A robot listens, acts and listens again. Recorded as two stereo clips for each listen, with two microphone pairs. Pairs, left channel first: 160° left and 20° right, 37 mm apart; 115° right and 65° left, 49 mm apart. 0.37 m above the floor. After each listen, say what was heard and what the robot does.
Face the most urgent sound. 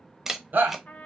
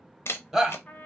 The shout: 20° right. Turn 20° right.
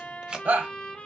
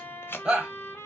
Facing the shout.